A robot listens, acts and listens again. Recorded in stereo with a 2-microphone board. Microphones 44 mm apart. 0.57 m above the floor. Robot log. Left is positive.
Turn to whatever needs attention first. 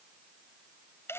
cmd idle
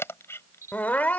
note: The crying: about 40° left or 140° left.
cmd yaw +40
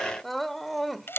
end: Found it: crying, straight ahead.